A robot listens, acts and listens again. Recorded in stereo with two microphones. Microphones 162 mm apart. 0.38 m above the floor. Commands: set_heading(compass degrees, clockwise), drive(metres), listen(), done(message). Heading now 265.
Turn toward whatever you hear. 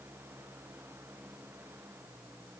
listen()
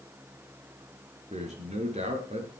set_heading(305)
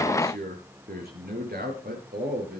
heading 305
set_heading(55)
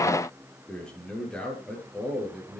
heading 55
done("Found it: a man speaking, straight ahead.")